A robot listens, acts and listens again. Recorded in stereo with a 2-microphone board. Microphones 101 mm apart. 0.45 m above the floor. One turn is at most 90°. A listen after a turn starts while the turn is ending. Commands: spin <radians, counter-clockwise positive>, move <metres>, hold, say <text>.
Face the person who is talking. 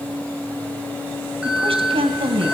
spin -1.22
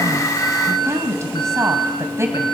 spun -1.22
spin -0.52
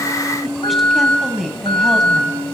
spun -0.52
say Found it: a woman speaking, straight ahead, 2 to 4 m away.